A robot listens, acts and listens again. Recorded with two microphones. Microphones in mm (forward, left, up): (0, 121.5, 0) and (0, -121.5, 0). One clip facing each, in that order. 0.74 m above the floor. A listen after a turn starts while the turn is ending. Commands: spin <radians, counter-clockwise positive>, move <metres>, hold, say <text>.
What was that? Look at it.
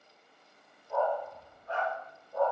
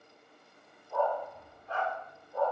spin 1.31
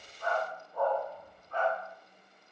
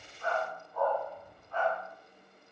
spin 0.79
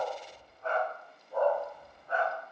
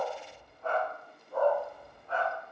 say Found it: a dog barking, straight ahead, 2 to 4 m away.